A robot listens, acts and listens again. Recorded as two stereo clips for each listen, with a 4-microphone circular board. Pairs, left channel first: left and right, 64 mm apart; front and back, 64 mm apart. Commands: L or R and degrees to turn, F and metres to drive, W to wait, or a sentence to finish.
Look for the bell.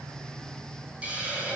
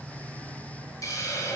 W
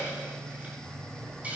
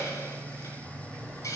W
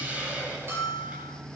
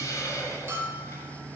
R140
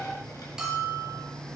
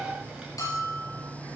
R10
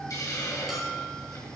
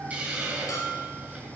Found it: a bell, straight ahead, over 4 m away.